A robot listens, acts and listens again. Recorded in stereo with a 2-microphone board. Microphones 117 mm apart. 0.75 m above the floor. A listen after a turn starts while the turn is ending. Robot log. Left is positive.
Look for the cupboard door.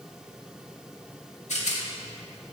cmd idle
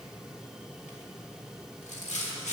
cmd idle
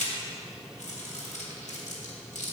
end: I can't make out a cupboard door, only a rattle.